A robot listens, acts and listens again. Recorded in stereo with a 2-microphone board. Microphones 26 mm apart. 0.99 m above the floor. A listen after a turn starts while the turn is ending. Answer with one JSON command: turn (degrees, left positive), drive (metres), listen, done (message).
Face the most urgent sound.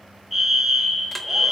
{"turn": -30}
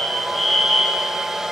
{"turn": 25}
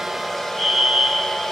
{"turn": -10}
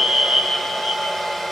{"done": "Facing the fire alarm."}